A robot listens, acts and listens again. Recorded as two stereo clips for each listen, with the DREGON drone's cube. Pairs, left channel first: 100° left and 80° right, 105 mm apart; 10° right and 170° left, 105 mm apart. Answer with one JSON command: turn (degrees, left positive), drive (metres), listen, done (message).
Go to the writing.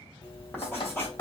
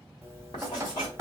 {"turn": 30}
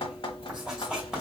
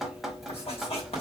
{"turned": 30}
{"drive": 1.0}
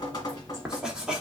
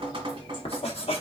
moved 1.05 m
{"drive": 1.0}
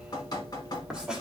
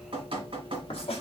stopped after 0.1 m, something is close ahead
{"done": "Arrived at the writing, straight ahead."}